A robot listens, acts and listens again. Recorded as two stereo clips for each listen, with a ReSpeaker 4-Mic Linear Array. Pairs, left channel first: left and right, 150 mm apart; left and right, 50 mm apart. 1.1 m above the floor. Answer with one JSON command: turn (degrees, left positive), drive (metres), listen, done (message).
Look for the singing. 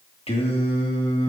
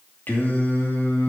{"turn": 45}
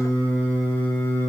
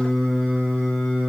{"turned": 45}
{"turn": 15}
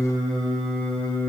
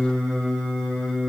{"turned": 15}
{"turn": 10}
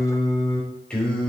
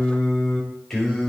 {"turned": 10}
{"done": "Facing the singing."}